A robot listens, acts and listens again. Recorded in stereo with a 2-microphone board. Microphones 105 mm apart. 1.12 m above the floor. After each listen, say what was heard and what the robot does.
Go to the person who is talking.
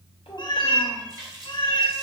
Turn 90° left.
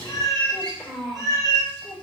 Drive 1.0 m forward.
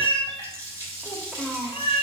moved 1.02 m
Drive 1.0 m forward.
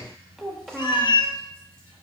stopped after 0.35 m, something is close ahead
I am next to the child speaking.